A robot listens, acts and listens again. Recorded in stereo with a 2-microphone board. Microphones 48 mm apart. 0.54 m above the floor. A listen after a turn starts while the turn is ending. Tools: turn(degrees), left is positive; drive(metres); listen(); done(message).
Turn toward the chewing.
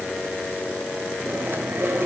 turn(degrees=-60)
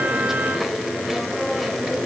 done("Found it: chewing, straight ahead.")